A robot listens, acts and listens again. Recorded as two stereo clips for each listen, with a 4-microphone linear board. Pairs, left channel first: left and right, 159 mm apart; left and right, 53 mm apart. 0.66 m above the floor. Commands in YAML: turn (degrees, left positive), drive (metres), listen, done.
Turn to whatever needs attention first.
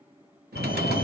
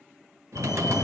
turn: 75
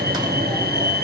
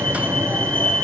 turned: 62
turn: 20
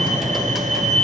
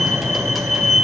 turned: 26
done: "Facing the fire alarm."